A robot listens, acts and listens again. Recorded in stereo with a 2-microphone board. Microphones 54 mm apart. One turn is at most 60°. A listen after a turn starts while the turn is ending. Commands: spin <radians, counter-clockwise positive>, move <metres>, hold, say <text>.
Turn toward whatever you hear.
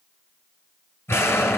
spin 0.87
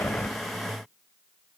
hold
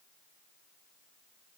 say I heard an explosion, but can't make it out now. It was about straight ahead or 80° left.